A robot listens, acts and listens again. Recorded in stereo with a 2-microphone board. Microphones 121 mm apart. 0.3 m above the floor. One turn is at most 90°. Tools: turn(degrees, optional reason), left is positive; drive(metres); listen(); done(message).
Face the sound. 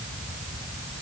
listen()
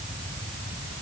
listen()
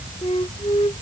turn(degrees=55, reason="The flute: about 55° left or 125° left.")
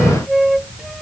done("Facing the flute.")